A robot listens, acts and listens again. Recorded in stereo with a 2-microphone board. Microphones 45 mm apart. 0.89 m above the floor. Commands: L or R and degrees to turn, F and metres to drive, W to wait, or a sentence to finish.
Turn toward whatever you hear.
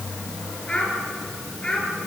L20
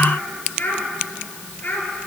L140
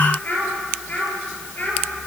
L45
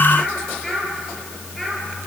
L10
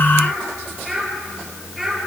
Found it: a child speaking, straight ahead.